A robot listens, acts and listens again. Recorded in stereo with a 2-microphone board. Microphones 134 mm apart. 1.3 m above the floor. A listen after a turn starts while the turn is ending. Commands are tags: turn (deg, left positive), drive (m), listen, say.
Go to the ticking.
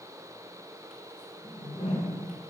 <listen/>
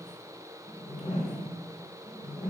<listen/>
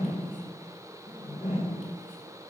<say>I can't make out ticking to turn to.</say>